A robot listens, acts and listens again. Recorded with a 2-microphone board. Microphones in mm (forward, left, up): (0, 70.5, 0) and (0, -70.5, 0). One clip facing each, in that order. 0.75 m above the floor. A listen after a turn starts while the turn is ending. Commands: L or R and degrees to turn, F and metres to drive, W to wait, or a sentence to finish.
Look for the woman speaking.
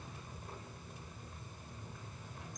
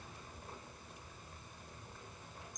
W
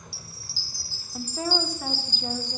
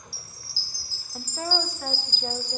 L30
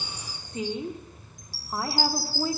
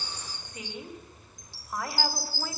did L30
L145
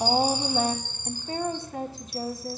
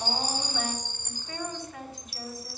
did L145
L35
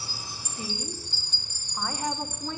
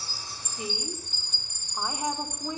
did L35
R20
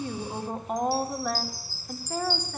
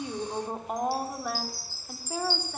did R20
Found it: a woman speaking, straight ahead, 2 to 4 m away.